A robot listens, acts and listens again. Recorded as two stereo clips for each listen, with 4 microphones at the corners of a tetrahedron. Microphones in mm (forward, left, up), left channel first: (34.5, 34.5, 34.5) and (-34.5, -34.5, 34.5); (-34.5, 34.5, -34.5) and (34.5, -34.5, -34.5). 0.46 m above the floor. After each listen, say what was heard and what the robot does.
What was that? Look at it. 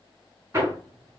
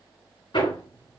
The hammering: 165° left. Turn 165° left.
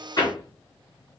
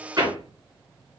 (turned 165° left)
Facing the hammering.